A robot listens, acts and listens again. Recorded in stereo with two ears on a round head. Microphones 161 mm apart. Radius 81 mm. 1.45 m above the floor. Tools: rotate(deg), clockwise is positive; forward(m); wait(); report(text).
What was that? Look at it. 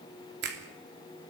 rotate(60)
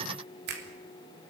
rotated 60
rotate(55)
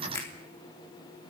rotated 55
rotate(-15)
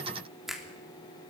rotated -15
report("Facing the finger snap.")